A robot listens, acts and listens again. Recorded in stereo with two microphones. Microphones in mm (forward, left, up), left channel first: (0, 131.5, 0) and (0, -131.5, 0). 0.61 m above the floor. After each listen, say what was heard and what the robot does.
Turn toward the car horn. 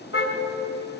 The car horn: about 55° left or 125° left. Turn 55° left.
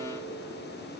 Keep listening.
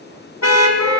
So it is at 70° left. Turn 70° left.
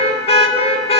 The car horn is now 25° left. Turn 25° left.
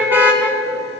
Facing the car horn.